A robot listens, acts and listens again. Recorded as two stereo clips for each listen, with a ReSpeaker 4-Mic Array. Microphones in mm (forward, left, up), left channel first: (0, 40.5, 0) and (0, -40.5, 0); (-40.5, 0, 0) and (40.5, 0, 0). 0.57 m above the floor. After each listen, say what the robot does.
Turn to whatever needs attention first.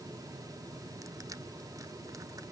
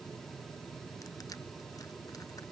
Keep listening.
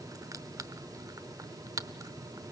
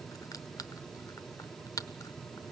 Keep listening.
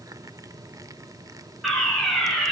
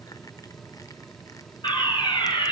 Turn 175° left.
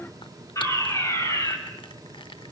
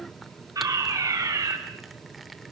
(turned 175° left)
Turn 40° left.
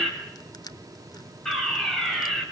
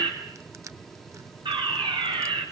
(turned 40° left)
Facing the fire alarm.